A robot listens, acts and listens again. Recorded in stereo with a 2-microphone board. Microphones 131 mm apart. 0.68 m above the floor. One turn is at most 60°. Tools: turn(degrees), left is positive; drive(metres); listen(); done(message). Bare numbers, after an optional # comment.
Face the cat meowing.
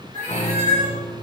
turn(-60)
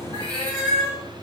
# So it is at 40° right.
turn(-40)
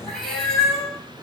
done("Found it: a cat meowing, straight ahead, 2 to 4 m away.")